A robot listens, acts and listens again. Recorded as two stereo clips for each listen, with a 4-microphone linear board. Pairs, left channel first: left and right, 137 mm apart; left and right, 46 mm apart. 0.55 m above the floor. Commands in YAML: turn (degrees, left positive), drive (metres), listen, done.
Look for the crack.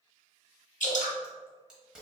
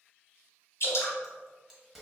turn: -30
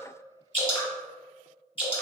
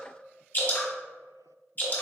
listen: true
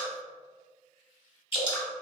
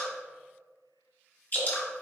done: "I heard a crack, but can't make it out now. It was about 25° left or 145° right."